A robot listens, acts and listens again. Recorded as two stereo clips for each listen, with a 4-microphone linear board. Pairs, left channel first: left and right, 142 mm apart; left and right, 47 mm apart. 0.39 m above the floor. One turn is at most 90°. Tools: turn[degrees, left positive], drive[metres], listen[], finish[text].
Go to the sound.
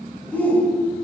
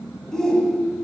Action: turn[30]
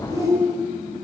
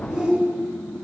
Thought: So it is at 20° right.
Action: turn[-20]
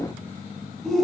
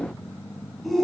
Action: drive[1.0]
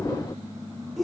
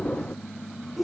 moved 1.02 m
Action: drive[1.0]
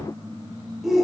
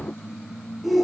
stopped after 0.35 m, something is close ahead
Action: finish[I am next to the shout.]